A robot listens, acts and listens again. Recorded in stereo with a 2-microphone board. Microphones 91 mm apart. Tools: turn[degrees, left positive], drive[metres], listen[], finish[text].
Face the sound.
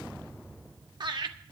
Thought: The laughter: about 55° right or 125° right.
Action: turn[-55]
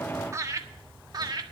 Thought: So it is at 50° right.
Action: turn[-50]
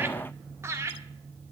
Thought: The laughter is now 35° right.
Action: turn[-35]
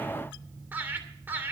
Thought: The laughter is now 20° right.
Action: turn[-20]
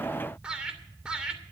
Thought: The laughter is now 10° right.
Action: turn[-10]
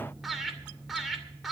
Action: finish[Facing the laughter.]